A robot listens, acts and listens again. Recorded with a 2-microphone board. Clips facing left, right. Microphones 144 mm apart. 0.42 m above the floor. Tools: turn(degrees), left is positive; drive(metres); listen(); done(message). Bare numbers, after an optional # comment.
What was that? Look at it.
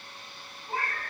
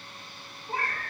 turn(30)
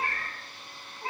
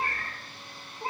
# So it is at 25° right.
turn(-25)
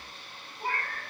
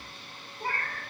# The cat meowing is now 10° left.
turn(10)
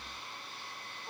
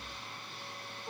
listen()
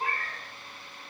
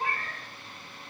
done("Facing the cat meowing, 1 to 2 m away.")